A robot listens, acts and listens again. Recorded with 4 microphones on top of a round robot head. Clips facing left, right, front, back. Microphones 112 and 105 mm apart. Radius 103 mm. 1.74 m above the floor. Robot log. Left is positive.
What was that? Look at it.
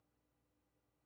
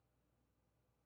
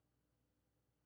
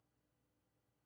cmd idle
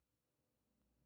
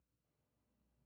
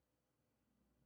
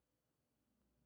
cmd idle
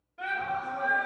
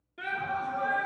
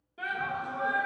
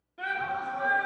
note: The shout: 75° right.
cmd yaw -75
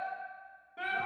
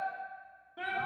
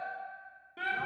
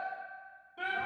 end: Facing the shout, under 1 m away.